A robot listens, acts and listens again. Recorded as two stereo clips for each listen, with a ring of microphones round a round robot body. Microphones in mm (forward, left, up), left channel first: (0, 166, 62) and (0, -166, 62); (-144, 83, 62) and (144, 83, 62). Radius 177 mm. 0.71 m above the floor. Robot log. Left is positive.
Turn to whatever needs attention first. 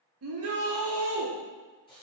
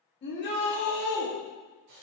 note: The shout: 130° right.
cmd yaw -130
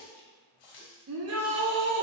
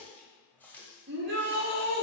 note: The shout is now 50° right.
cmd yaw -50
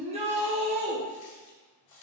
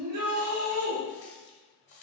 note: The shout is now 20° right.
cmd yaw -20
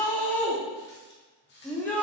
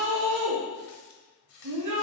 end: Found it: a shout, straight ahead.